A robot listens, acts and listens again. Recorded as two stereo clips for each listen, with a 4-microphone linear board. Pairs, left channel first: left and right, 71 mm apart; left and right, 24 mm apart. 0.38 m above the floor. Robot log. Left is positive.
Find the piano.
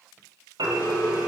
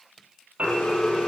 note: The piano: about 70° right or 110° right.
cmd yaw -70
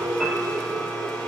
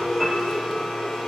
cmd idle
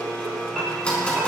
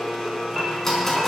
end: Facing the piano.